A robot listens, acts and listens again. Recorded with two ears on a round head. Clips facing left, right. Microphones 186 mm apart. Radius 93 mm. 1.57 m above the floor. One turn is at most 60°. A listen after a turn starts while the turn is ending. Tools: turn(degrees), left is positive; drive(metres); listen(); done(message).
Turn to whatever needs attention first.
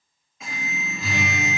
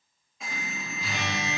turn(degrees=30)
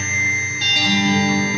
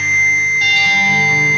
turn(degrees=60)
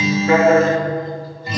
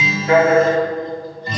turn(degrees=60)
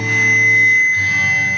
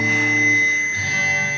turn(degrees=40)
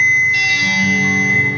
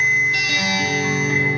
done("Facing the alarm.")